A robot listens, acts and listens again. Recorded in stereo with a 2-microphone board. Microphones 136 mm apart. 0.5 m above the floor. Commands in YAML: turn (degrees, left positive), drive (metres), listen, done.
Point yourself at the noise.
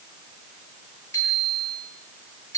turn: 20
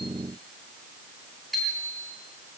done: "Facing the bicycle bell, over 4 m away."